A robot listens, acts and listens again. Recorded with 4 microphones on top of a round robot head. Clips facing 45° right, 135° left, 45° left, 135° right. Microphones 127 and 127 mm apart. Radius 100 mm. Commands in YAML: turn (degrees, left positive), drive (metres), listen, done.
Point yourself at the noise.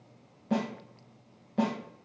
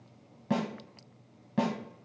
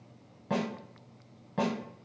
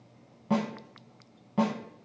turn: 145
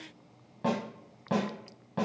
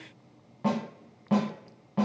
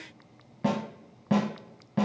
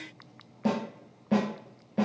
turn: 40
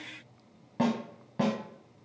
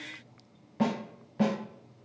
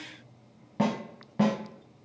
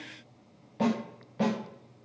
done: "Facing the snare drum."